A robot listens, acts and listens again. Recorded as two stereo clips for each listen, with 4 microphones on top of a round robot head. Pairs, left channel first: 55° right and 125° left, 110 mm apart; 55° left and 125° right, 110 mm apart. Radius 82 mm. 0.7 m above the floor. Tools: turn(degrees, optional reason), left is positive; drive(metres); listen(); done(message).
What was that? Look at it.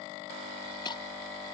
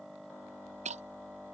turn(degrees=-105, reason="The breaking glass: 105° right.")
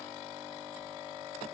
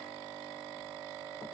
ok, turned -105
done("Facing where the breaking glass came from. I can't hear it now.")